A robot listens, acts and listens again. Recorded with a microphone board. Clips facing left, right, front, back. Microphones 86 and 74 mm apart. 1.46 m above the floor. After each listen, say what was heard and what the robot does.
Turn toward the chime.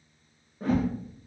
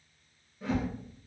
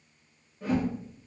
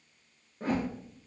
Keep listening.
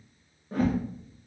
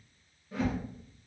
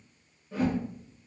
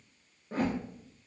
Keep listening.
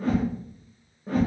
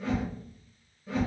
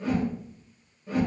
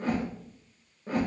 I can't make out a chime, only a whoosh.